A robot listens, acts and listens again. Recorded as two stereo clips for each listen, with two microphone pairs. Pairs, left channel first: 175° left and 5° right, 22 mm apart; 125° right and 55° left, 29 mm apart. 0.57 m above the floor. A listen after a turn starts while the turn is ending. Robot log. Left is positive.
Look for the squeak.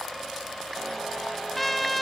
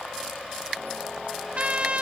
cmd idle
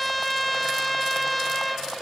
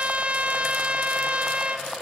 cmd idle
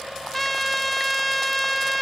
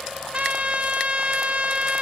end: I can't make out a squeak, only a trumpet.